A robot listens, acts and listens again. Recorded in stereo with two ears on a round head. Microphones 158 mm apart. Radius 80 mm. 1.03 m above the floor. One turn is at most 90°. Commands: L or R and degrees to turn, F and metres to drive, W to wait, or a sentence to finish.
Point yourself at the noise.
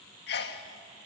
L60
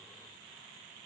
W
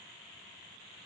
I heard a sneeze, but can't make it out now. It was about straight ahead or 60° left.